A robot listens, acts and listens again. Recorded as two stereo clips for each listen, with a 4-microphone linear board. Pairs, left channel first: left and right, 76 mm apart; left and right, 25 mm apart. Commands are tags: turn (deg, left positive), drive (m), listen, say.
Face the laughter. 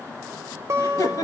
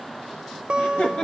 <turn deg="50"/>
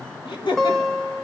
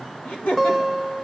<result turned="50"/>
<turn deg="80"/>
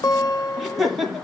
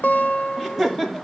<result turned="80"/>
<say>Found it: laughter, straight ahead.</say>